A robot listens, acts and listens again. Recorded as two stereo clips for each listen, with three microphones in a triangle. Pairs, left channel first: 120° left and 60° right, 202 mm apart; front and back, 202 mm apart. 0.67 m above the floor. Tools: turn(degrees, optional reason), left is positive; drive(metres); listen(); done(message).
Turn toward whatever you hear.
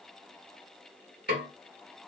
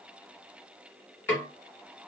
turn(degrees=-75, reason="The snare drum: 75° right.")
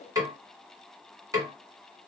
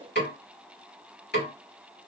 turn(degrees=10, reason="The snare drum is now 10° left.")
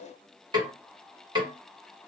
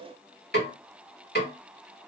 done("Found it: a snare drum, straight ahead, 1 to 2 m away.")